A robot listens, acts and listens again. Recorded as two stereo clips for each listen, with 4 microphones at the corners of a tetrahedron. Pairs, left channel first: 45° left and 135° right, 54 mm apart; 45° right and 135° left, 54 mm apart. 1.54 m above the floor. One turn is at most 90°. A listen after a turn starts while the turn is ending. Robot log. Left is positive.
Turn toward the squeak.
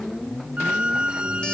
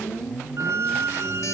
note: The squeak: 155° left.
cmd yaw +90
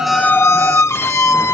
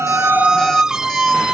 note: The squeak is now 60° left.
cmd yaw +60
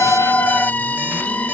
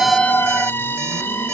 note: The squeak is now 10° right.
cmd yaw -10
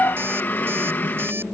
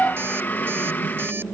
end: Facing the squeak.